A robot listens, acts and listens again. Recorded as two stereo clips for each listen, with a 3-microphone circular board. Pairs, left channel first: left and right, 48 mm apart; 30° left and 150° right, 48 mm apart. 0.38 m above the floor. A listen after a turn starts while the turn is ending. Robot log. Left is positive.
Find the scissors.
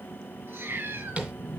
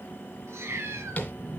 cmd idle
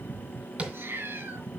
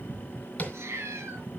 cmd idle
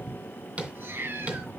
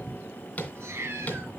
end: I can't make out scissors to turn to.